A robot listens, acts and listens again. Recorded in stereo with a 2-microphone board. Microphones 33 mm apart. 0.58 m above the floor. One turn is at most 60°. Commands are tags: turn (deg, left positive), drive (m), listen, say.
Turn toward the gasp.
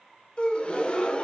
<turn deg="30"/>
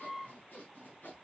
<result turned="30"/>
<listen/>
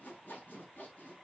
<say>I heard a gasp, but can't make it out now. It was about straight ahead or 120° left.</say>